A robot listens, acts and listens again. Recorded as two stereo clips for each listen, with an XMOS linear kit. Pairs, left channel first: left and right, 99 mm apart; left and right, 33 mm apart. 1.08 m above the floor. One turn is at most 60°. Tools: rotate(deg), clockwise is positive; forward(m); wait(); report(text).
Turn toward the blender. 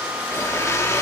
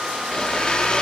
rotate(-30)
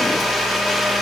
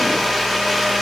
report("Found it: a blender, straight ahead.")